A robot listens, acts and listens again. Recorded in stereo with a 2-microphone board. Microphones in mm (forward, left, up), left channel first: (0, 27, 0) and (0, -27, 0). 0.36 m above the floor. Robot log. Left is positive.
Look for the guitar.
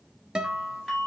note: The guitar: about 15° right or 165° right.
cmd yaw -15
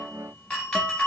cmd idle
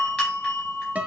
note: So it is at 150° right.
cmd yaw -150
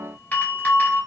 cmd idle
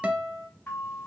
note: The guitar is now 25° right.
cmd yaw -25
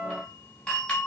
end: Found it: a guitar, straight ahead, under 1 m away.